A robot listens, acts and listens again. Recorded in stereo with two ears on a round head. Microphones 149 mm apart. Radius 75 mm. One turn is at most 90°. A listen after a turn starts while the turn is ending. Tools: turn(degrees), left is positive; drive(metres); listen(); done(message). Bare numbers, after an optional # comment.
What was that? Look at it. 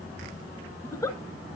# The giggle: about 20° left or 160° left.
turn(20)
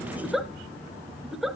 done("Facing the giggle.")